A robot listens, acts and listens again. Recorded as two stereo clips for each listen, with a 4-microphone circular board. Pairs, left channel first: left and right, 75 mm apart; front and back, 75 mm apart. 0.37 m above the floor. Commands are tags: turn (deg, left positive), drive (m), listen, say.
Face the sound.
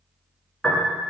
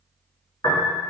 <turn deg="10"/>
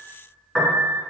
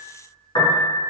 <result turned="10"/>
<say>Found it: a piano, straight ahead, under 1 m away.</say>